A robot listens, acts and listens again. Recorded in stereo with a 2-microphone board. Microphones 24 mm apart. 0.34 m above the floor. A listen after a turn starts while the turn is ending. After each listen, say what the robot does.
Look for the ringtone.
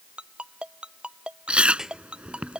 Turn 40° right.
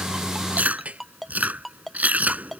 Facing the ringtone.